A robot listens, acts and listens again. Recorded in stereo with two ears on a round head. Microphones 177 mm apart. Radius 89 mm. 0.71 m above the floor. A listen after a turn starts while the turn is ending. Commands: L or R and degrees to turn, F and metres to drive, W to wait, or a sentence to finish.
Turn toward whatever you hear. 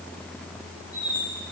L50
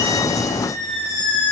Found it: a squeak, straight ahead.